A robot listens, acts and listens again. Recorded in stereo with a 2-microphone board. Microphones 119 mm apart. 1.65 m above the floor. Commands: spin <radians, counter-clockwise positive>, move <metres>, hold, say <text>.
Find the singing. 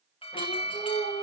spin 1.05
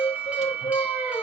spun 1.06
spin 1.13
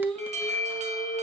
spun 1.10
spin 0.17
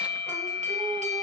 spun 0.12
hold
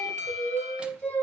spin 0.17
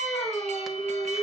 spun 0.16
say Facing the singing.